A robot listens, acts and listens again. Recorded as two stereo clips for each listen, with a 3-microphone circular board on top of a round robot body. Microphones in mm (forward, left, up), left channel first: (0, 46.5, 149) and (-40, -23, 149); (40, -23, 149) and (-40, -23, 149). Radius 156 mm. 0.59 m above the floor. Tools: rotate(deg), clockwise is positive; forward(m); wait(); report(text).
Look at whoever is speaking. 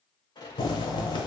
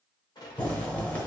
wait()
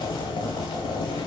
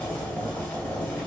wait()
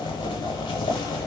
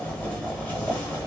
report("I can't make out anyone speaking to turn to.")